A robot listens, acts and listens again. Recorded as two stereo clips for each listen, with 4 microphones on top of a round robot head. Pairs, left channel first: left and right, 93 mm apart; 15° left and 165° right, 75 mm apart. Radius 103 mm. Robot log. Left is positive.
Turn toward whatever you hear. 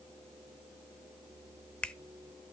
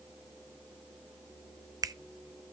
note: The finger snap: 165° left.
cmd yaw +165
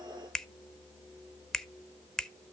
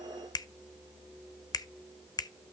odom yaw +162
end: Facing the finger snap, under 1 m away.